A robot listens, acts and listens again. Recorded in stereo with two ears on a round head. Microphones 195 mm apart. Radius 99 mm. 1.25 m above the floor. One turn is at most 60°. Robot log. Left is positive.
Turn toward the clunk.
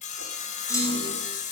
cmd yaw +30
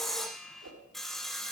cmd idle
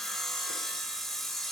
end: I heard a clunk, but can't make it out now. It was about 15° right or 135° left.